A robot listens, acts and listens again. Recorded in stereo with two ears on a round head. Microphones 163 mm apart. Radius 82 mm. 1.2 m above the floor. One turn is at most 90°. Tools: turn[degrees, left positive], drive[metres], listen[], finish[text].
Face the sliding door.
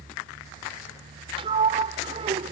Thought: The sliding door: about 30° right or 150° right.
Action: turn[-30]
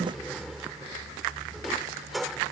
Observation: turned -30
Action: finish[Found it: a sliding door, straight ahead.]